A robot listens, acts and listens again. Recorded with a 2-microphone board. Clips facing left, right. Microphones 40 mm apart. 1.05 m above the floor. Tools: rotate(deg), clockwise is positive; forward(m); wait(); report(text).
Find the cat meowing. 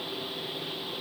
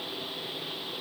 wait()
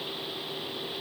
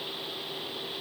wait()
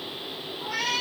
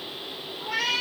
rotate(25)
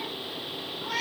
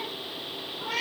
rotate(130)
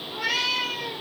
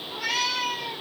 rotate(-15)
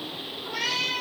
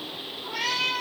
report("Facing the cat meowing, 2 to 4 m away.")